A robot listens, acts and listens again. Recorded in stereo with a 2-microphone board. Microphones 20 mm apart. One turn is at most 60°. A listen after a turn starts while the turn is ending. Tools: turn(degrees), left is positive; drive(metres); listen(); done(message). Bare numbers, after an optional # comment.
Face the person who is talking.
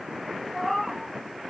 listen()
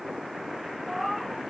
listen()
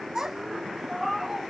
# The child speaking: about 25° right or 155° right.
turn(-25)
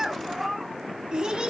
# So it is at 120° right.
turn(-60)
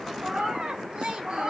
# The child speaking is now 70° right.
turn(-60)
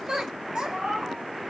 # The child speaking is now 45° right.
turn(-45)
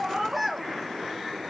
done("Found it: a child speaking, straight ahead.")